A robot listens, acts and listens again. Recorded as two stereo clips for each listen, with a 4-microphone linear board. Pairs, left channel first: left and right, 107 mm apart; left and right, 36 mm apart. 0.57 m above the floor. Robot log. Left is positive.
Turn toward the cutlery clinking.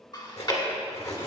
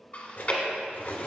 note: The cutlery clinking: about 70° left or 110° left.
cmd yaw +70
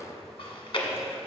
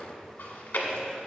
cmd idle
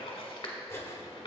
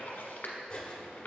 note: So it is at 25° left.
cmd yaw +25
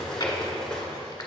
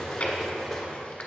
end: Facing the cutlery clinking.